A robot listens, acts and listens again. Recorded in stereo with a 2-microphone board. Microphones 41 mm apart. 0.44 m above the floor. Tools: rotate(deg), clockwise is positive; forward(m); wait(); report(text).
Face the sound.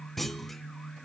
rotate(-30)
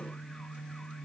wait()
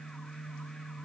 report("I heard a clunk, but can't make it out now. It was about 25° right or 145° left.")